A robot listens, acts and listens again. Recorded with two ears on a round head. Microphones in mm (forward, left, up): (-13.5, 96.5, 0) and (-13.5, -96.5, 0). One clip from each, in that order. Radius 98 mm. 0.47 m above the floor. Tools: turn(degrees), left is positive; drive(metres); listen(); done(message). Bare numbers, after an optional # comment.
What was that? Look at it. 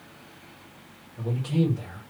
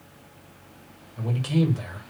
# The man speaking: about 65° right or 115° right.
turn(-65)
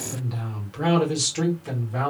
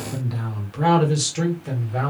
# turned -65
done("Found it: a man speaking, straight ahead, 1 to 2 m away.")